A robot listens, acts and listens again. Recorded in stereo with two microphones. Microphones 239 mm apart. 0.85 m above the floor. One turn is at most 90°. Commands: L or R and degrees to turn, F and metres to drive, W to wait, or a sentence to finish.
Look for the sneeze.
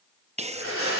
R25
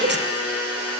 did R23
R90
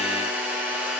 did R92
R35
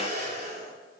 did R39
Facing where the sneeze came from. I can't hear it now.